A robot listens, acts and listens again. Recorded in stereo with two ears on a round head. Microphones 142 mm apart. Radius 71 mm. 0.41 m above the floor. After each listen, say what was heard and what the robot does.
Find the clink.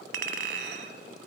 The clink: about 75° right or 105° right. Turn 75° right.
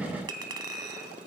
So it is at 25° right. Turn 25° right.
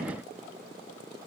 Keep listening.
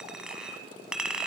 Facing the clink.